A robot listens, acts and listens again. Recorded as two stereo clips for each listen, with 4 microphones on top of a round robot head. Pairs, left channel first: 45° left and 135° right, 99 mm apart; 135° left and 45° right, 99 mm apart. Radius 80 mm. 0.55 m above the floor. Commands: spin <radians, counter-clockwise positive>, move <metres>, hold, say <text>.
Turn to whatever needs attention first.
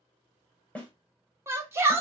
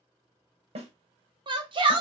spin -1.22
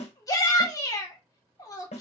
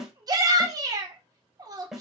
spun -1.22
say Found it: a shout, straight ahead, 1 to 2 m away.